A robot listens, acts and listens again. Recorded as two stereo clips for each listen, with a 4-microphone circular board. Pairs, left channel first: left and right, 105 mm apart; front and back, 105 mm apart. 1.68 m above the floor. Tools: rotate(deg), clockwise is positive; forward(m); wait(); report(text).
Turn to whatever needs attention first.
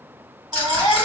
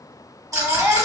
rotate(125)
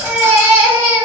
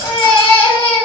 rotate(30)
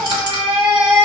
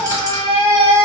rotate(15)
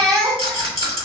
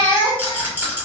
report("Facing the baby crying, 1 to 2 m away.")